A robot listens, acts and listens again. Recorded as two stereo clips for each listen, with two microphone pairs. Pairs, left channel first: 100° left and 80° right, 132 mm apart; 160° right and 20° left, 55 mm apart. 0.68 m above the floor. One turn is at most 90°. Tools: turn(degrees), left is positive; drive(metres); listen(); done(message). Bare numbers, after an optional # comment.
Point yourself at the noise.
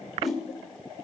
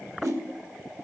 # The whoosh: 15° left.
turn(15)
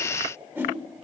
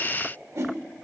done("Found it: a whoosh, straight ahead, 1 to 2 m away.")